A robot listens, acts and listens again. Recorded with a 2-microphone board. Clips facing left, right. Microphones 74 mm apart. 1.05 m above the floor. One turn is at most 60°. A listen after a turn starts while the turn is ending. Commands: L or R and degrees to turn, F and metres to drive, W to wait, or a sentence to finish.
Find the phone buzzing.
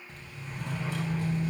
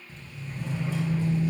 L15
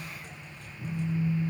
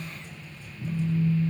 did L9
L60
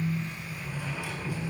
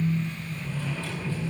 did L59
L60
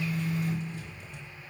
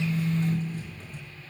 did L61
L30
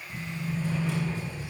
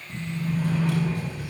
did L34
Facing the phone buzzing.